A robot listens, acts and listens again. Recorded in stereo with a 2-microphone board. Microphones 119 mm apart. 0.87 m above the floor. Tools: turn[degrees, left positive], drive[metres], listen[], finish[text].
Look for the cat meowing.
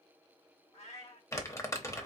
Thought: The cat meowing: about 65° left or 115° left.
Action: turn[65]
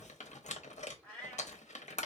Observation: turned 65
Thought: So it is at 10° left.
Action: turn[10]
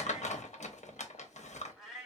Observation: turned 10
Action: finish[Facing the cat meowing, 1 to 2 m away.]